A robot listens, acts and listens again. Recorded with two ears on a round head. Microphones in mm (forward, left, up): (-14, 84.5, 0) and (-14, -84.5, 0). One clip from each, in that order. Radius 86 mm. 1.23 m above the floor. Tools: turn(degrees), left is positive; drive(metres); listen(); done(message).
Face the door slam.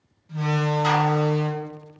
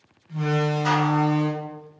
turn(degrees=55)
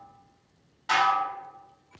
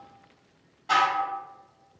listen()
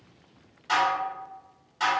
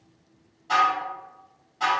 done("I heard a door slam, but can't make it out now. It was about straight ahead or 70° left.")